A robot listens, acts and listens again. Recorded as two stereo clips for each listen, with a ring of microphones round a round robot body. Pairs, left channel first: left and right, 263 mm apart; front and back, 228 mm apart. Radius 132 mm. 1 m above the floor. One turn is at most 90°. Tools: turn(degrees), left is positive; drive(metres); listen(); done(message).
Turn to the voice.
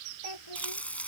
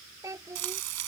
turn(degrees=90)
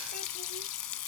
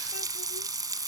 turn(degrees=15)
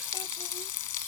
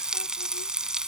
listen()
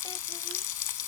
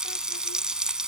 done("I heard a child speaking from this way, but can't make it out now.")